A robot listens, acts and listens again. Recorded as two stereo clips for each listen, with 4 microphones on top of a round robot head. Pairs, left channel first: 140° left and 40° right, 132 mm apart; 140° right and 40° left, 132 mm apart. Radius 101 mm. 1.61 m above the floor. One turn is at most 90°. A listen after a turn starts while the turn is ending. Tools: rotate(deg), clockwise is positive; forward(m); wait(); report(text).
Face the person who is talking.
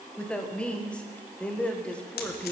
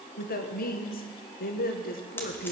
rotate(90)
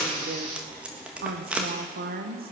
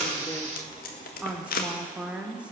rotate(45)
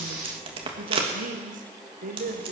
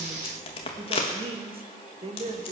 rotate(10)
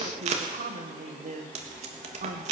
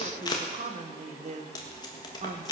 report("Facing the woman speaking, 1 to 2 m away.")